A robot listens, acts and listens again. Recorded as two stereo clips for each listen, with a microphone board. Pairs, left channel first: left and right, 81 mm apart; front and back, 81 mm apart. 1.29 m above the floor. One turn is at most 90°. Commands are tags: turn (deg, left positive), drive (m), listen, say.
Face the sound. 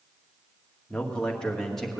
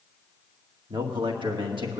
<turn deg="90"/>
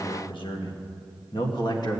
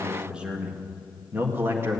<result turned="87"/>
<turn deg="90"/>
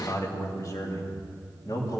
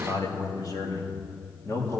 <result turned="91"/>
<turn deg="55"/>
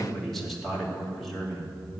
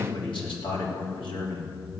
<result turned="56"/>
<say>Found it: a man speaking, straight ahead.</say>